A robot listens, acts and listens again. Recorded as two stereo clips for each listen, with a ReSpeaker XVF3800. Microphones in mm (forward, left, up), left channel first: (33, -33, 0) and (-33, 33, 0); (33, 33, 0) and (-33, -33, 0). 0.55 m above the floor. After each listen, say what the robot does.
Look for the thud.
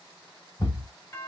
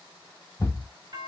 Turn 15° right.
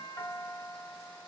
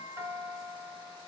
I heard a thud from this way, but can't make it out now.